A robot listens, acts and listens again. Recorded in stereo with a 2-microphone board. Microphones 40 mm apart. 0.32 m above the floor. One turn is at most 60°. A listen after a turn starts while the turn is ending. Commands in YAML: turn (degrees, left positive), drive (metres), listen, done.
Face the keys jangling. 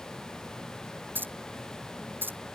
turn: -60
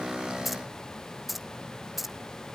done: "Found it: keys jangling, straight ahead."